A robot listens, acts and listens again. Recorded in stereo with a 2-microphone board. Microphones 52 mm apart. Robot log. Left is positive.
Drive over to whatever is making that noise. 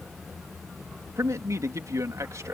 cmd yaw -90
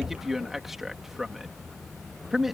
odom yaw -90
cmd fwd 1.0
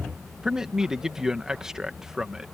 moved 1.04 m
note: The man speaking is now 10° right.
cmd yaw -10
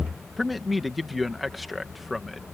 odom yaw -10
cmd fwd 1.0
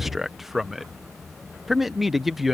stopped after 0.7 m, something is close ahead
end: Arrived at the man speaking, straight ahead.